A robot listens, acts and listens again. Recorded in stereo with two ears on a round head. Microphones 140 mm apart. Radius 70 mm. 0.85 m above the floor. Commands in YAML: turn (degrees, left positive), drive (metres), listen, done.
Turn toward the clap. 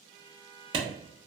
turn: -35
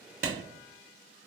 turn: -105
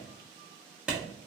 done: "Facing the clap, 1 to 2 m away."